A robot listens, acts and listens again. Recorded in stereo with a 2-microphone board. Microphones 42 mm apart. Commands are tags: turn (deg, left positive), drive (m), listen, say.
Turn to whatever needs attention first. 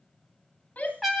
<turn deg="30"/>
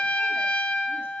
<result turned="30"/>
<listen/>
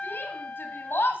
<turn deg="110"/>
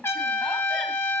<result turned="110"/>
<listen/>
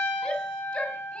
<turn deg="35"/>
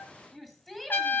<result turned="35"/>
<turn deg="10"/>
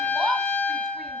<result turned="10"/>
<say>Facing the shout, 2 to 4 m away.</say>